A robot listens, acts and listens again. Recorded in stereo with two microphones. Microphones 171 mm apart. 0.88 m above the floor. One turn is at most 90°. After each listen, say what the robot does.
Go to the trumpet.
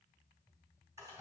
Keep listening.
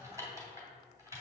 Keep listening.
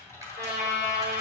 Turn 75° right.
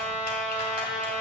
Drive 1.0 m forward.
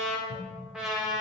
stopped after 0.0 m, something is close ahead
Blocked. The trumpet is further on, straight ahead.